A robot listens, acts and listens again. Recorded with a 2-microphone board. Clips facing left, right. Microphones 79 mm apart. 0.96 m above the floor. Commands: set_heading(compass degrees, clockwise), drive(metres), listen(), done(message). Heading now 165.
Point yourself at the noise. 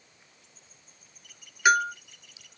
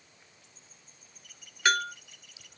set_heading(135)
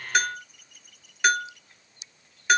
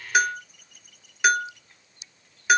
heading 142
done("Found it: a bell, straight ahead, under 1 m away.")